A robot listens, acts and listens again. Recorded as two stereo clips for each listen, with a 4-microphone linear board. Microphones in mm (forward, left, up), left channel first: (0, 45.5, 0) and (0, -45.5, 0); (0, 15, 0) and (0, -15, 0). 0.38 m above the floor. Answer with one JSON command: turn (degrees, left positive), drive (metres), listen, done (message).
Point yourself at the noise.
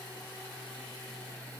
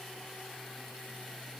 {"listen": true}
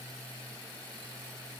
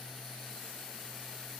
{"listen": true}
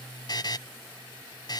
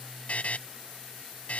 {"turn": 50}
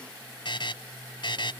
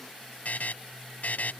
{"turn": 75}
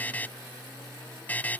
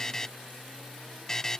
{"turn": 20}
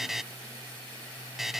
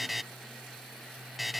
{"done": "Facing the buzzer."}